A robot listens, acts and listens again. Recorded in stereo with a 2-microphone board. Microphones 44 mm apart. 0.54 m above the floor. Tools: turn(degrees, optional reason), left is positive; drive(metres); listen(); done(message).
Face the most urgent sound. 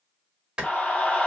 turn(degrees=30, reason="The scream: about 30° left or 150° left.")
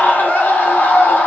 turn(degrees=110, reason="So it is at 110° left.")
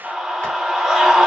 turn(degrees=-10, reason="The scream is now 10° right.")
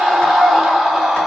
done("Found it: a scream, straight ahead, 1 to 2 m away.")